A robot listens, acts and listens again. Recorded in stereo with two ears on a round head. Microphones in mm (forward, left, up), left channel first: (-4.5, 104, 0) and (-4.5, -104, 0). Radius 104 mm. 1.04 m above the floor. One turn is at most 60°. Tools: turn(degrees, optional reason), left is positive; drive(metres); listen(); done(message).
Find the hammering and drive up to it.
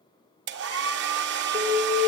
listen()
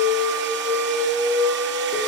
listen()
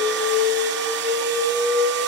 done("I can't make out hammering, only an alarm and a hair dryer.")